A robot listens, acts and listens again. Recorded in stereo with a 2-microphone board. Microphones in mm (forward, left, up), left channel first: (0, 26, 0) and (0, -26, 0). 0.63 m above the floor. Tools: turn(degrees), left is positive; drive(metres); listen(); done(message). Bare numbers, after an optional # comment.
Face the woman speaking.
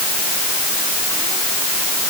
listen()
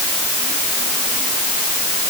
listen()
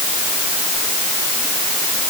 done("I can't make out a woman speaking to turn to.")